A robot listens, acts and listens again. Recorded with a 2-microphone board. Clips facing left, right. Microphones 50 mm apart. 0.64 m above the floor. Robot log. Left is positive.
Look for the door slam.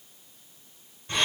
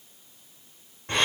cmd idle
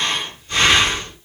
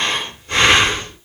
cmd idle
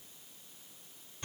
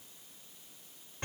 end: I can't make out a door slam, only breathing.